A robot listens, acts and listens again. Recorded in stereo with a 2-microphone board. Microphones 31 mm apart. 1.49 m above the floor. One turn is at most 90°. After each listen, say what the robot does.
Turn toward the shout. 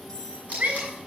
Turn 60° right.
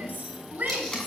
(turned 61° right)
Turn 60° right.
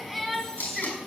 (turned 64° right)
Facing the shout, over 4 m away.